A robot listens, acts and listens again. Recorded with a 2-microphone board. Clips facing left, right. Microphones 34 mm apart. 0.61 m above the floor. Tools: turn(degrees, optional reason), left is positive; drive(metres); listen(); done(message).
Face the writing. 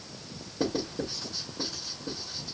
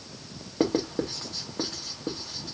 turn(degrees=-60, reason="The writing: about 60° right or 120° right.")
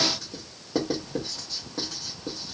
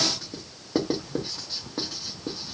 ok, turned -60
turn(degrees=-20, reason="So it is at 20° right.")
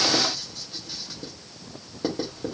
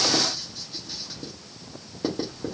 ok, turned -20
done("Found it: writing, straight ahead.")